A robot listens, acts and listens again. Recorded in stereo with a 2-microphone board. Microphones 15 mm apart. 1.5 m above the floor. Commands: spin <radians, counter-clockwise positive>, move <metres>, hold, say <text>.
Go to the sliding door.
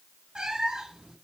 hold
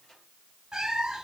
hold
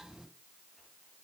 say I can't make out a sliding door, only a cat meowing.